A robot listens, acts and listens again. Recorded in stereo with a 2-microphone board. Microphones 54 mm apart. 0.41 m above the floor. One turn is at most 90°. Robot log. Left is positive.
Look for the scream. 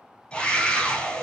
note: The scream: about 15° left or 165° left.
cmd yaw +15
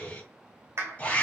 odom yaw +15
note: So it is at 150° left.
cmd yaw +90
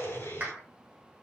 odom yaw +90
note: The scream is now 75° left.
cmd yaw +75
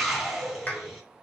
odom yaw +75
end: Facing the scream, 2 to 4 m away.